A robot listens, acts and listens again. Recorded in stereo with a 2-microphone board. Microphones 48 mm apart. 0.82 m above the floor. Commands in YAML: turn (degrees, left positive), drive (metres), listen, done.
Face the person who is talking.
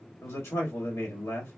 turn: 70
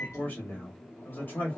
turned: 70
turn: 35
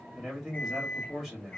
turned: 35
turn: -15
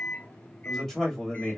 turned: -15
done: "Found it: a man speaking, straight ahead."